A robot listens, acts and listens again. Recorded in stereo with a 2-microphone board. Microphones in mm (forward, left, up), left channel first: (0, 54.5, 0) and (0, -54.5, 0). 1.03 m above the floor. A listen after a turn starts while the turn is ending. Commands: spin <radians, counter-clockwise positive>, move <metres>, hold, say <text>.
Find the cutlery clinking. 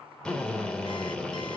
hold
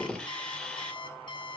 hold
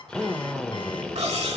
spin -1.57
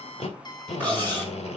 spin 0.26
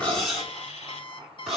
say Facing the cutlery clinking.